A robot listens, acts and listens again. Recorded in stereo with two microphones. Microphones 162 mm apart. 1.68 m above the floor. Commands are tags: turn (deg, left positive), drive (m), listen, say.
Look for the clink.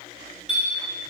<turn deg="-30"/>
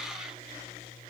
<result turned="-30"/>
<listen/>
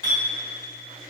<turn deg="30"/>
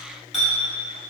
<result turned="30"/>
<say>Facing the clink, 1 to 2 m away.</say>